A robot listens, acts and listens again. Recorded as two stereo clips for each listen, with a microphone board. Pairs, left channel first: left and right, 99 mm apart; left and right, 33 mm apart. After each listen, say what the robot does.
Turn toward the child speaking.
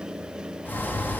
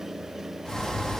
Keep listening.
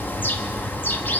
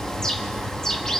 Keep listening.
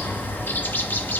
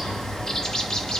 I can't make out a child speaking, only a bird.